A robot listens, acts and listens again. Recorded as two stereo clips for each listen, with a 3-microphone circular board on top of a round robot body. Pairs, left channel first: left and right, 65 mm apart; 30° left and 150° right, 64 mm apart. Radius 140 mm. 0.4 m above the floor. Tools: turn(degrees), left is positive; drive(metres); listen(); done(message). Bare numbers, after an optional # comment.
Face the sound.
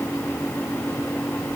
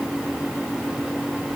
listen()
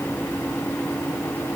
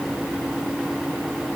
listen()
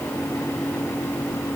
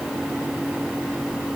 done("I can't make out anything.")